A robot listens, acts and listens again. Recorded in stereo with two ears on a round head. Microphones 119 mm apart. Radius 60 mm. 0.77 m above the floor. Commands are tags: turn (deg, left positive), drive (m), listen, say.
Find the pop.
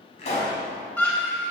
<turn deg="55"/>
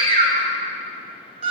<listen/>
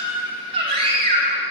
<say>I heard a pop, but can't make it out now. It was about straight ahead or 70° left.</say>